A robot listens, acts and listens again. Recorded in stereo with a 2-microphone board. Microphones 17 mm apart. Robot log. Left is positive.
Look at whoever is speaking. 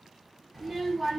note: The child speaking: about 20° right or 160° right.
cmd yaw -20
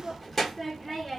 end: Found it: a child speaking, straight ahead, 1 to 2 m away.